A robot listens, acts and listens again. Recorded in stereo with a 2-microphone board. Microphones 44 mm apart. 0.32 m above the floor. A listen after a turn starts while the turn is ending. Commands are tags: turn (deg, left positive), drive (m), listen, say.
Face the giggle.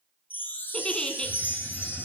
<turn deg="20"/>
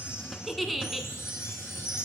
<say>Facing the giggle, under 1 m away.</say>